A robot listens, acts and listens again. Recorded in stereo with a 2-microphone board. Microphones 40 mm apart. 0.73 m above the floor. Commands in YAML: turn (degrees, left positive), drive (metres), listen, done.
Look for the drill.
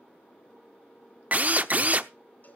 turn: -40
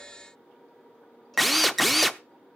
done: "Found it: a drill, straight ahead."